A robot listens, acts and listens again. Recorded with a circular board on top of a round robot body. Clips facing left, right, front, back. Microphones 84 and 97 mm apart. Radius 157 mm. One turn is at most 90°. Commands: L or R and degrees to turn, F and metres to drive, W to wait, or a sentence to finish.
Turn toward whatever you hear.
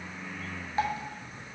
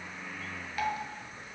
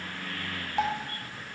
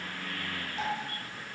L30
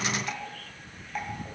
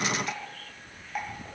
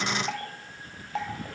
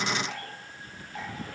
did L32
Found it: dripping, straight ahead, 1 to 2 m away.